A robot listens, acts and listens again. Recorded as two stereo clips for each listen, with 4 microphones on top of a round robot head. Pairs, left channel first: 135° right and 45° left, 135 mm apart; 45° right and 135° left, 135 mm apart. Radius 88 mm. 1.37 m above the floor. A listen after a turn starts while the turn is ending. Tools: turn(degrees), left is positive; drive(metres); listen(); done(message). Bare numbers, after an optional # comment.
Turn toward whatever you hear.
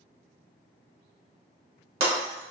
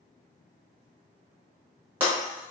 # The breaking glass: 55° left.
turn(55)
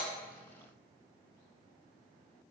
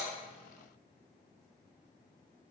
done("Facing where the breaking glass came from. I can't hear it now.")